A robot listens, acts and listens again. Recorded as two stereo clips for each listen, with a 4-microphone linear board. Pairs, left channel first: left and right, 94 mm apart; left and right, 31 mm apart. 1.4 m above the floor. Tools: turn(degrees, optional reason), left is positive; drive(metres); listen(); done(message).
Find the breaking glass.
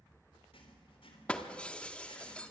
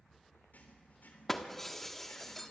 turn(degrees=30)
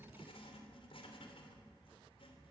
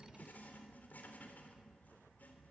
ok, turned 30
listen()
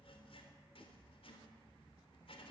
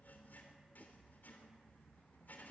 done("I heard breaking glass, but can't make it out now. It was about 20° right or 140° left.")